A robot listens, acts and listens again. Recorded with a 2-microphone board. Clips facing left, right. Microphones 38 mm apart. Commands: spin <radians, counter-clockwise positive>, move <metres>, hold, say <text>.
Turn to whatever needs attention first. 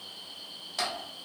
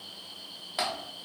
hold
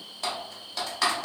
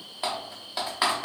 hold
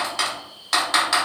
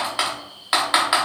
say I can't make out anything urgent, only typing on a keyboard.